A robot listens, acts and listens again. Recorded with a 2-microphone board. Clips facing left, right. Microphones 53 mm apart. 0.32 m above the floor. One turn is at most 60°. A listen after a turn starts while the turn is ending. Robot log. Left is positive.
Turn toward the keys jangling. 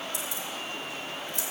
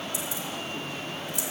note: The keys jangling: about 45° left or 135° left.
cmd yaw +45
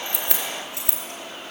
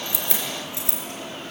note: So it is at 75° left.
cmd yaw +60
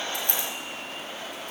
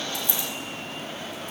note: Nothing new. It was at 15° left.
cmd yaw +15
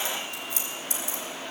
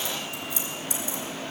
note: The keys jangling is now 55° left.
cmd yaw +55
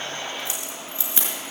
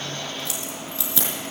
note: The keys jangling is now 20° left.
cmd yaw +20
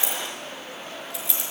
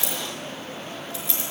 end: Found it: keys jangling, straight ahead.